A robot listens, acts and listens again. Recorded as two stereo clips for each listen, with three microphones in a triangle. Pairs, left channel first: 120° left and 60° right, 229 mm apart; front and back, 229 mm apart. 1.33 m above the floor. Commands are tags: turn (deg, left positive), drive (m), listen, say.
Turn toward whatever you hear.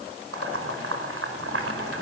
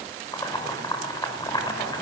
<turn deg="-75"/>
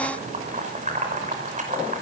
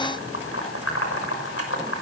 <say>Found it: boiling, straight ahead.</say>